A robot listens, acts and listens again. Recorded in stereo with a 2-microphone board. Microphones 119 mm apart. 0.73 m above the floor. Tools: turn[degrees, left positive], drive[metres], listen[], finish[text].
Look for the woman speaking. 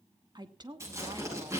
Thought: The woman speaking: about 40° right or 140° right.
Action: turn[-40]
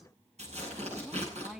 Action: finish[Facing the woman speaking.]